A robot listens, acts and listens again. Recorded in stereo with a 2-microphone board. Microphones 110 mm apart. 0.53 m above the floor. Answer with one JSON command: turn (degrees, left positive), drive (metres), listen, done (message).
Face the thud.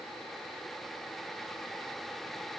{"listen": true}
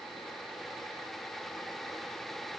{"listen": true}
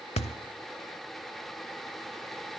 {"turn": 75}
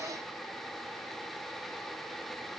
{"listen": true}
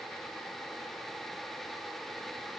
{"done": "I heard a thud, but can't make it out now. It was about straight ahead or 30° left."}